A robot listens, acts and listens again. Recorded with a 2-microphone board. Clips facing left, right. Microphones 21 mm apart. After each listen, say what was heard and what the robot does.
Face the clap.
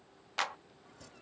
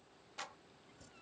The clap: about 50° left or 130° left. Turn 50° left.
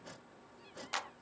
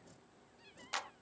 Found it: a clap, straight ahead.